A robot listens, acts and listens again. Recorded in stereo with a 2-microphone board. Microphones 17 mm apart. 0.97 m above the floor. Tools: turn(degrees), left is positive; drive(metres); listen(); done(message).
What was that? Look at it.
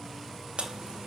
turn(degrees=-90)
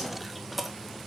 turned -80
done("Found it: chewing, straight ahead, 1 to 2 m away.")